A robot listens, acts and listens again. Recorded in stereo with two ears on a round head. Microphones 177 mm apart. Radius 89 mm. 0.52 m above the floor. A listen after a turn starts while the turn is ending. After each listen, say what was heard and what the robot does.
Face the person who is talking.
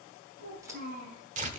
The child speaking: about 50° right or 130° right. Turn 50° right.
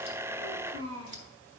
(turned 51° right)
So it is at 80° right. Turn 80° right.
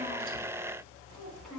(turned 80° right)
Facing the child speaking.